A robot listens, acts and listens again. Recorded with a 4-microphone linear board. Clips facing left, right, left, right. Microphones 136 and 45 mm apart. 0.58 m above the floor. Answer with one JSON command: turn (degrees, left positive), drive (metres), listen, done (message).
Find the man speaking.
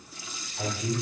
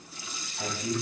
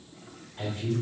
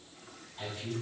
{"turn": 55}
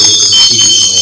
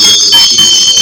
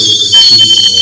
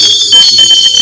{"listen": true}
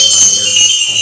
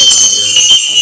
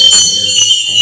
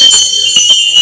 {"listen": true}
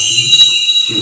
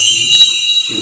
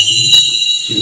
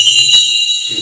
{"turn": 25}
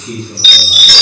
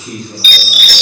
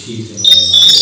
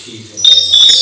{"done": "Found it: a man speaking, straight ahead, 2 to 4 m away."}